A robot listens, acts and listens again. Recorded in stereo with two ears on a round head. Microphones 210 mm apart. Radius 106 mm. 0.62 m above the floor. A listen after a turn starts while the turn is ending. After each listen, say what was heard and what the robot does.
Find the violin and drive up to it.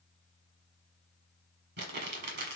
Keep listening.
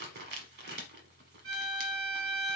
The violin: about 60° right or 120° right. Turn 60° right.
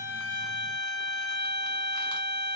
So it is at 15° right. Turn 15° right.
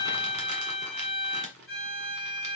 Drive 1.0 m forward.
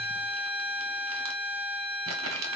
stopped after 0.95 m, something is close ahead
The violin is now 10° left. Turn 10° left.
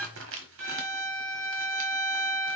Arrived at the violin, straight ahead.